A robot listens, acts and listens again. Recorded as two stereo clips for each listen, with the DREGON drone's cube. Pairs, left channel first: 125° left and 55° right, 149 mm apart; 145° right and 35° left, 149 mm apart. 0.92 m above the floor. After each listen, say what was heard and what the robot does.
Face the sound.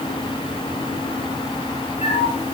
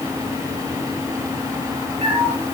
The cat meowing: 80° left. Turn 80° left.
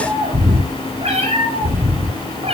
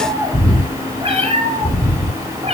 The cat meowing is now 10° right. Turn 10° right.
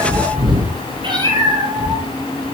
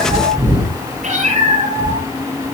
Facing the cat meowing, over 4 m away.